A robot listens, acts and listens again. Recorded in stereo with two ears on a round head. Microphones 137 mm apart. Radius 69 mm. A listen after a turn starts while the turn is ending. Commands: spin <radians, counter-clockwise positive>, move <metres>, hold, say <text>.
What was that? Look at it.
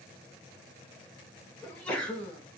spin 0.52
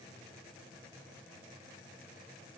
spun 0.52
hold
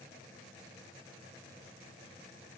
say I heard a sneeze, but can't make it out now. It was about 25° right or 145° left.